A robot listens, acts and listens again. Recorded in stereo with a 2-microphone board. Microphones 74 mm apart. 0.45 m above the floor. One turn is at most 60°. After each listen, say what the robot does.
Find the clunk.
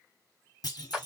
Turn 60° left.
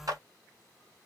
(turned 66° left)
Keep listening.
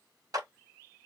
I heard a clunk, but can't make it out now. It was about 5° right or 50° left.